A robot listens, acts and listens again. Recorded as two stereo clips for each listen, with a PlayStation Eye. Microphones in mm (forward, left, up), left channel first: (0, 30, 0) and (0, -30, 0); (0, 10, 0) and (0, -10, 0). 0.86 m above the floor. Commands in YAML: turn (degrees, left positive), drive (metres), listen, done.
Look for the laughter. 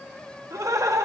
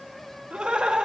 turn: -60
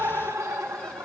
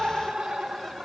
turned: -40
turn: -65
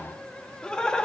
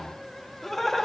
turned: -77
turn: 15
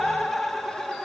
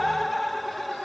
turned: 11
done: "Found it: laughter, straight ahead."